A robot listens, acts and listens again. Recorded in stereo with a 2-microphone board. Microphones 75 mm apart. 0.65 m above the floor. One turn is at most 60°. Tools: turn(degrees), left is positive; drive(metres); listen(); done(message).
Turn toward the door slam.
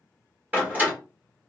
turn(degrees=-25)
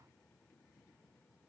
listen()
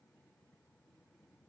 done("I heard a door slam, but can't make it out now. It was about straight ahead or 130° right.")